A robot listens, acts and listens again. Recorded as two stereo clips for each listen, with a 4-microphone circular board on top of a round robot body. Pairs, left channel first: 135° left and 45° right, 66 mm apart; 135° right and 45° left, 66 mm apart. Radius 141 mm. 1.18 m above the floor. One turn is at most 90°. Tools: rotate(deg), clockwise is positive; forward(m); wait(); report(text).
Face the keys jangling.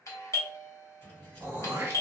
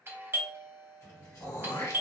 rotate(90)
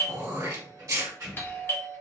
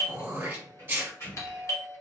rotate(85)
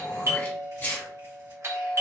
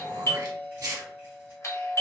wait()
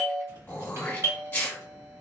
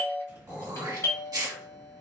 report("Facing the keys jangling.")